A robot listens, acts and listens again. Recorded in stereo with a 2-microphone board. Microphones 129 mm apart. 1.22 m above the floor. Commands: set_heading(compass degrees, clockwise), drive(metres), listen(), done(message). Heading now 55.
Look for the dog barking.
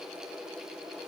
listen()
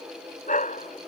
set_heading(345)
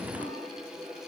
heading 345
listen()
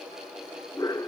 set_heading(320)
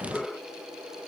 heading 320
done("Facing the dog barking.")